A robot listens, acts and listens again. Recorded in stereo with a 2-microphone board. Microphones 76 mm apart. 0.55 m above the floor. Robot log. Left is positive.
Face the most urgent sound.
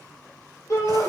note: The shout: about 45° left or 135° left.
cmd yaw +45
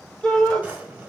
end: Facing the shout, 1 to 2 m away.